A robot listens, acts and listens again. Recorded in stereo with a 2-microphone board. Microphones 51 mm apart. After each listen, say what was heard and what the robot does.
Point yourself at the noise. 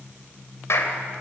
The clap: about 70° left or 110° left. Turn 70° left.
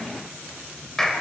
So it is at 10° left. Turn 10° left.
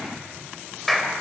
Facing the clap.